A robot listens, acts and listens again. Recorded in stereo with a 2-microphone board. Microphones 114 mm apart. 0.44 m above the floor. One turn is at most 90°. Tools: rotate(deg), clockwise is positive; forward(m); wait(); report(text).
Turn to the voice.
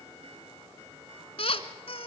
wait()
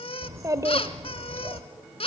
rotate(30)
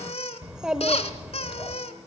rotate(10)
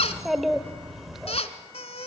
report("Facing the child speaking.")